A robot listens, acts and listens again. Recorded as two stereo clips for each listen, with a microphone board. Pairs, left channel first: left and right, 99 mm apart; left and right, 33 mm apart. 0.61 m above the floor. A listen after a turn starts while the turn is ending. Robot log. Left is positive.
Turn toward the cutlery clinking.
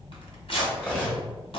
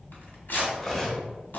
note: The cutlery clinking: about 15° left or 165° left.
cmd yaw +15
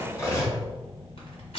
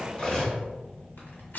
note: So it is at 150° left.
cmd yaw +150
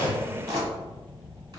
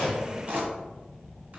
cmd idle
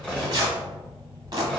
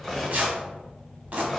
end: Facing the cutlery clinking.